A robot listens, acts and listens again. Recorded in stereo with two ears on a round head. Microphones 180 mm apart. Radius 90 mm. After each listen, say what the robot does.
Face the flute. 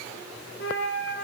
Turn 50° left.
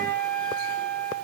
Found it: a flute, straight ahead, 1 to 2 m away.